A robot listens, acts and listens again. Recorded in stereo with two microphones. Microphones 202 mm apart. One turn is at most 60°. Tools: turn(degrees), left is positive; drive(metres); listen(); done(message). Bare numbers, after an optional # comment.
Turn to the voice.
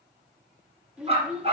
turn(-30)
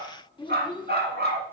# So it is at 25° left.
turn(25)
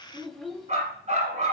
done("Found it: a child speaking, straight ahead, 1 to 2 m away.")